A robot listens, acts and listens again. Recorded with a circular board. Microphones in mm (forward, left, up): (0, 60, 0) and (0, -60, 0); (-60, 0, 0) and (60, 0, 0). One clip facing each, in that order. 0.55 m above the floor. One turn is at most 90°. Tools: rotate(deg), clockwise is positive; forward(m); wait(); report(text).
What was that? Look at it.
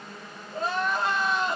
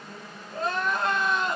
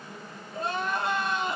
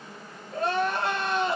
report("Facing the crying, 2 to 4 m away.")